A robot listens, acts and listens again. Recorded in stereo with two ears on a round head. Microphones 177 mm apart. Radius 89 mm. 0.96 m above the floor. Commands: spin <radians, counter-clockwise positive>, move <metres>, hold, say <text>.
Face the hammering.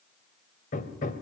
spin 0.79
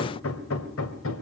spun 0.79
spin 1.66
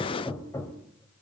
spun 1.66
spin 0.26
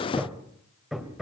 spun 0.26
say Found it: hammering, straight ahead, 2 to 4 m away.